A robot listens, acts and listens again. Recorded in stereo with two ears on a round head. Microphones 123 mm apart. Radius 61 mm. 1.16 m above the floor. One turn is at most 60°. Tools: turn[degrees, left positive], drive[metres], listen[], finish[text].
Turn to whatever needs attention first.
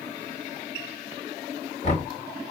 Action: listen[]
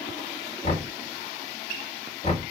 Action: listen[]
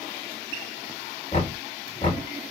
Action: finish[I can't make out anything urgent to turn to.]